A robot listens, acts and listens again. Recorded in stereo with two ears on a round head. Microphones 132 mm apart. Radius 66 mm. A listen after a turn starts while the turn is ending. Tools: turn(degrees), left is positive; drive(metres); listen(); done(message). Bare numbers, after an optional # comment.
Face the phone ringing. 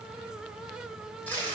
listen()
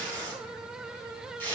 listen()
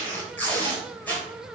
done("I can't make out a phone ringing to turn to.")